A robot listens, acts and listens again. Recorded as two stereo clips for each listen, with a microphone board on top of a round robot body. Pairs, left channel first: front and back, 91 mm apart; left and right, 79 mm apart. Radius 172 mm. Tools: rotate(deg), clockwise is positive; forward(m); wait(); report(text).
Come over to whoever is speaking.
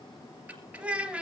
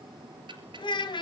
rotate(-100)
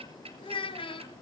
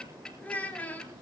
rotate(-20)
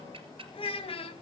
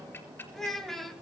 forward(1.0)
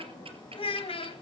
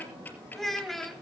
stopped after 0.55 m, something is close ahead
report("Blocked. The child speaking is further on, straight ahead.")